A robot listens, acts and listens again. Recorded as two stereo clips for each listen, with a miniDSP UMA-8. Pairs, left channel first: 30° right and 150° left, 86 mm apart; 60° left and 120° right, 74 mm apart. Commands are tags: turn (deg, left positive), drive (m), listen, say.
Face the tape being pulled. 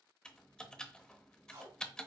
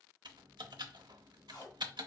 <turn deg="95"/>
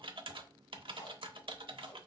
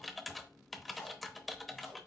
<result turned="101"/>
<say>Facing the tape being pulled, 1 to 2 m away.</say>